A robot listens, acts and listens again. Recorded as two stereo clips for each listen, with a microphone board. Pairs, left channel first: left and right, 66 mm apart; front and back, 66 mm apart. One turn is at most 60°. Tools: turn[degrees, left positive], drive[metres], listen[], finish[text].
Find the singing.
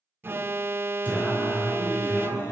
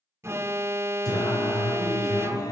Thought: The singing: 35° left.
Action: turn[35]
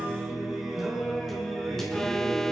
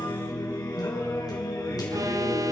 Thought: The singing is now 10° left.
Action: turn[10]
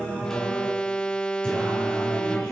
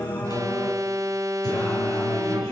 Thought: The singing is now 15° left.
Action: turn[15]
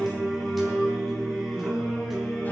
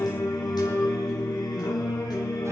Action: finish[Found it: singing, straight ahead, over 4 m away.]